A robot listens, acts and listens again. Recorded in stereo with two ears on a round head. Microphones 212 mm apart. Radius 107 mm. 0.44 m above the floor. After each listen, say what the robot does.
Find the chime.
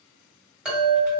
Turn 30° right.
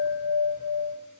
Turn 145° right.
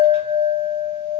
Turn 15° right.
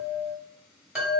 Found it: a chime, straight ahead.